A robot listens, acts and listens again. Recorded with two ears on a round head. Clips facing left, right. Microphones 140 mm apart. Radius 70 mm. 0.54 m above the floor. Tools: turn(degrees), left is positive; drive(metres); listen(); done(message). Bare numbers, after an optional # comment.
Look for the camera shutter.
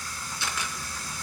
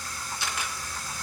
turn(90)
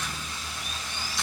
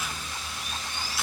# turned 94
listen()
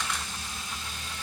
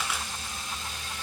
done("Facing the camera shutter.")